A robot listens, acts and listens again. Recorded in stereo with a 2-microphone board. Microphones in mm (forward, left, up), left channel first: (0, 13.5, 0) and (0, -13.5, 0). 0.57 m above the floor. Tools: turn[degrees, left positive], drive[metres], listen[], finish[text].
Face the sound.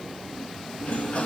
Thought: The sliding door: about 55° left or 125° left.
Action: turn[55]
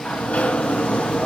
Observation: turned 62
Thought: So it is at 65° left.
Action: turn[65]
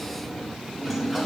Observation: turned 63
Action: finish[Found it: a sliding door, straight ahead.]